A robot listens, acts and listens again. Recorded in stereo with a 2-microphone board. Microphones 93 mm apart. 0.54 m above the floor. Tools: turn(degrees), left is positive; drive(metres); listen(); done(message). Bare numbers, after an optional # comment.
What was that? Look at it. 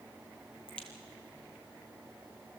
turn(30)
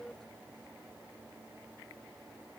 listen()
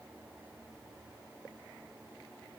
done("I heard a crack, but can't make it out now. It was about 20° right or 140° left.")